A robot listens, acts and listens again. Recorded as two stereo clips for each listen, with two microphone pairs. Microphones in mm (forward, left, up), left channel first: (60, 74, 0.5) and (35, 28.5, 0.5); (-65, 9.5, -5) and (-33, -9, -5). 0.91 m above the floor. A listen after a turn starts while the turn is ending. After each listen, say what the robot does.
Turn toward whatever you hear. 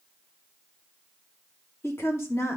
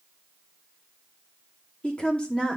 Turn 85° left.
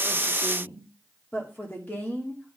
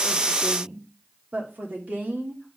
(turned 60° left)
Found it: a woman speaking, straight ahead.